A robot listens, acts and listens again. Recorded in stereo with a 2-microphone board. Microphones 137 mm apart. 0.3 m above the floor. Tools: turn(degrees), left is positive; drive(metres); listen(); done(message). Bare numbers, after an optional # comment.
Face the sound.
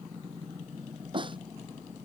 # The snare drum: about 35° right or 145° right.
turn(-35)
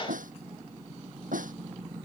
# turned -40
# So it is at 105° right.
turn(-105)
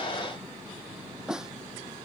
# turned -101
done("Facing the snare drum.")